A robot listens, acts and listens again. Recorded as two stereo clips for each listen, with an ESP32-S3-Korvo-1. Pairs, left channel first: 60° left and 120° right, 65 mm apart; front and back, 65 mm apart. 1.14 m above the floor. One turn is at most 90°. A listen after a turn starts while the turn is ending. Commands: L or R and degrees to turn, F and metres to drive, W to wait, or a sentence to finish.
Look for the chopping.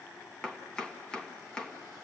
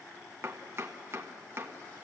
L90
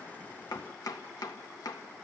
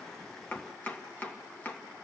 L60
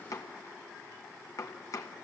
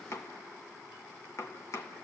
L35
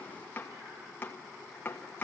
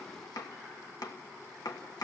Found it: chopping, straight ahead, 1 to 2 m away.